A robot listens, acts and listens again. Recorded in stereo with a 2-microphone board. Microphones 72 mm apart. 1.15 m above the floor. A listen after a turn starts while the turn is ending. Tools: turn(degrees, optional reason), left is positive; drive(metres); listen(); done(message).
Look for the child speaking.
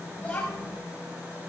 turn(degrees=30)
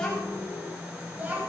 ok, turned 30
turn(degrees=-25, reason="So it is at 25° right.")
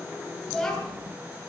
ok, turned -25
done("Found it: a child speaking, straight ahead, over 4 m away.")